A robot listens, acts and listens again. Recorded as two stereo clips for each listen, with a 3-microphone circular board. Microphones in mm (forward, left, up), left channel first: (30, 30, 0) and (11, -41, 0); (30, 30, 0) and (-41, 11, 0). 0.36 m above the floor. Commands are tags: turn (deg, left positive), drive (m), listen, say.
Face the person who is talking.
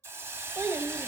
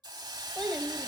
<turn deg="-65"/>
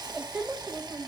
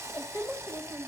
<turn deg="-25"/>
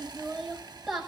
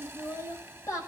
<turn deg="-20"/>
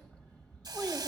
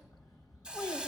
<say>Facing the child speaking, 1 to 2 m away.</say>